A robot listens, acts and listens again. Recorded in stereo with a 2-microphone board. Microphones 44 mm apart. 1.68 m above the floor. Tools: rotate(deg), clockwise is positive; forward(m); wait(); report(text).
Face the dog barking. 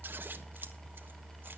wait()
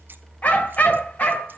rotate(-40)
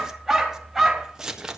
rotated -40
report("Found it: a dog barking, straight ahead.")